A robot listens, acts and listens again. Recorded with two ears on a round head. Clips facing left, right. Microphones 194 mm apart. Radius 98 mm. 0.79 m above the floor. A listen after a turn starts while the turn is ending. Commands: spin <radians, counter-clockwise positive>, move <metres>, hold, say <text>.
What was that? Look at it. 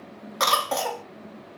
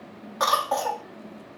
spin 0.61
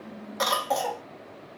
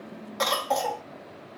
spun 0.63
say Found it: a cough, straight ahead.